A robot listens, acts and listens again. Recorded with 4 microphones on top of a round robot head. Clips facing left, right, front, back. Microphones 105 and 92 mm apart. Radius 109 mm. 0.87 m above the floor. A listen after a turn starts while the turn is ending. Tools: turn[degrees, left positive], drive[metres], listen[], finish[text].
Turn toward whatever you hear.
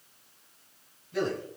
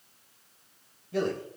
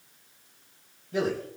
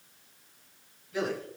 Thought: The man speaking: 55° right.
Action: turn[-55]
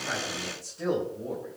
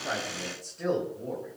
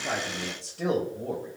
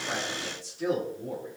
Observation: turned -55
Action: finish[Found it: a man speaking, straight ahead.]